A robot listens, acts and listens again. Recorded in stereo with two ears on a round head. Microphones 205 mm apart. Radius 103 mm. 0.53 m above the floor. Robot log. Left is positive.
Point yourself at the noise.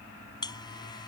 note: The buzzer: about 20° left or 160° left.
cmd yaw +20
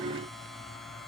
end: Facing the buzzer.